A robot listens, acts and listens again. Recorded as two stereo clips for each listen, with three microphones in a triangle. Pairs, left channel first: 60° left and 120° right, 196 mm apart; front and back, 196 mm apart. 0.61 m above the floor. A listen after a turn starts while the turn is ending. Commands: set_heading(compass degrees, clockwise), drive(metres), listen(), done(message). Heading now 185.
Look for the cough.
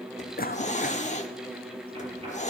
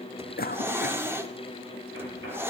set_heading(155)
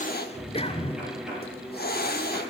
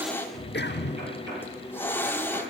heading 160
done("Facing the cough.")